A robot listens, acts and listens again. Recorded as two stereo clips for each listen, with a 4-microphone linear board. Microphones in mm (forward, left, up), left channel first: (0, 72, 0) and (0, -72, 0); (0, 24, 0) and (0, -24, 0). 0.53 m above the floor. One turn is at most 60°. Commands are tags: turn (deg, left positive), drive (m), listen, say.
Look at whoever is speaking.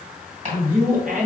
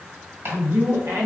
<turn deg="-60"/>
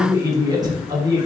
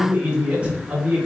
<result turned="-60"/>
<turn deg="-30"/>
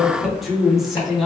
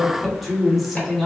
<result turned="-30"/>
<say>Facing the man speaking, 1 to 2 m away.</say>